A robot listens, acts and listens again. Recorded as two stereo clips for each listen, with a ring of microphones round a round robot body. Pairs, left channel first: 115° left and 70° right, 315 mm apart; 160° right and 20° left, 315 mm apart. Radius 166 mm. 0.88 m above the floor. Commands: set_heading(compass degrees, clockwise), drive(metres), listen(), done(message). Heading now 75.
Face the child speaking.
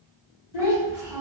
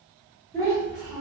set_heading(315)
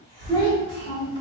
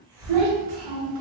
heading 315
set_heading(270)
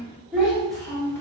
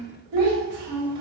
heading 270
set_heading(240)
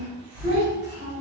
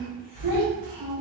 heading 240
set_heading(225)
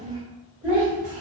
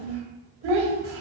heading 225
set_heading(215)
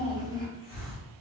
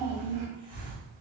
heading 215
done("Found it: a child speaking, straight ahead, 1 to 2 m away.")